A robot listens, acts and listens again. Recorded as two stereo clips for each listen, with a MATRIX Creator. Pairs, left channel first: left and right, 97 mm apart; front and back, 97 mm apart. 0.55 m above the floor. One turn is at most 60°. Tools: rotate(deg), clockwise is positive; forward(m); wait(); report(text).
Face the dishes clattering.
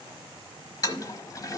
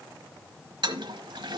wait()
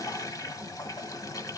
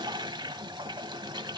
wait()
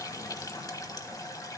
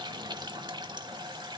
report("I can't make out dishes clattering, only a toilet flushing.")